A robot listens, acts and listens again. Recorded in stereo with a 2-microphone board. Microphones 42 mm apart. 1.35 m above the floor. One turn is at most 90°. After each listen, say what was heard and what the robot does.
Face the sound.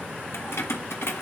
The keys jangling: about 75° left or 105° left. Turn 75° left.
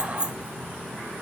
So it is at 20° right. Turn 20° right.
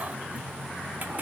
Keep listening.
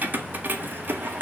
The keys jangling is now 55° right. Turn 55° right.
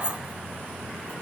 Keep listening.
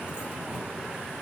Keep listening.
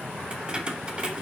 The keys jangling is now 25° right. Turn 25° right.
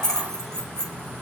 The keys jangling is now 15° left. Turn 15° left.
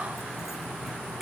Keep listening.
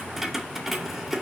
Facing the keys jangling, 2 to 4 m away.